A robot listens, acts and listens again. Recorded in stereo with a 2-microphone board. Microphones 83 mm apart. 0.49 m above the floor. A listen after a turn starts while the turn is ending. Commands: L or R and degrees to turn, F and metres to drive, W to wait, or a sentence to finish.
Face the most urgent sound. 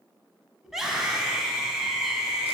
R30
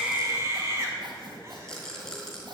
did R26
R145
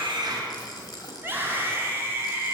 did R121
R25
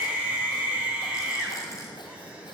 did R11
R15
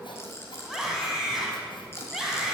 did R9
Found it: a scream, straight ahead.